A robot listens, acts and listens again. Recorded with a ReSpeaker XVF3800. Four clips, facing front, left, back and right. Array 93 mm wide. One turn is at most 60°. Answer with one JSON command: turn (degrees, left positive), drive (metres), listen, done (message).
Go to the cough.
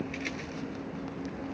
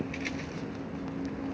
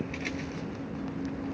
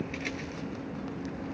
{"listen": true}
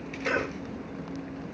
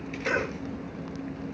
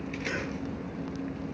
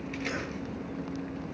{"turn": 60}
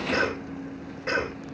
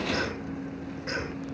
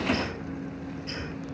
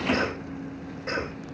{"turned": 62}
{"drive": 1.0}
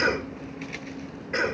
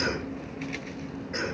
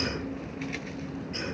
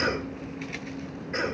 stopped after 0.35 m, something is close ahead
{"done": "Blocked. The cough is further on, straight ahead."}